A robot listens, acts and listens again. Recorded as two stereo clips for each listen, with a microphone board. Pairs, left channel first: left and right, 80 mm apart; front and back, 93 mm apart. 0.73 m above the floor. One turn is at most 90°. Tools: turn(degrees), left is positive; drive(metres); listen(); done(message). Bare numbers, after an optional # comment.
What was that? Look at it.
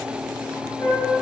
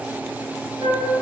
# The flute: 155° left.
turn(90)
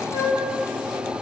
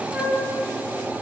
# The flute is now 100° left.
turn(90)
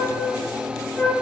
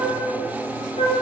# The flute is now 10° left.
turn(10)
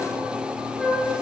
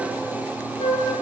done("Facing the flute.")